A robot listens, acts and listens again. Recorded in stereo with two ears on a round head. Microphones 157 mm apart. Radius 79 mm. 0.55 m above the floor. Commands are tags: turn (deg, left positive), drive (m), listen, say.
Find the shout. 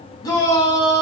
<turn deg="20"/>
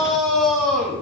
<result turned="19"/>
<say>Found it: a shout, straight ahead.</say>